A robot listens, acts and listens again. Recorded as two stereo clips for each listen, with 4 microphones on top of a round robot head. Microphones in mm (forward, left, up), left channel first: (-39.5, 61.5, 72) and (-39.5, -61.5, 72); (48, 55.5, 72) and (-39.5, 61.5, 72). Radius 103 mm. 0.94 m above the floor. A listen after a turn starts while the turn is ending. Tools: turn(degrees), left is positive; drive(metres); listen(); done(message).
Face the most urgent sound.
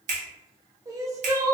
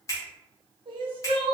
turn(degrees=-155)
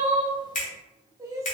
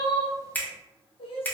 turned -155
turn(degrees=-25)
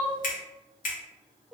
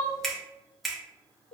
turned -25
listen()
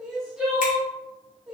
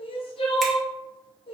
done("Facing the crying.")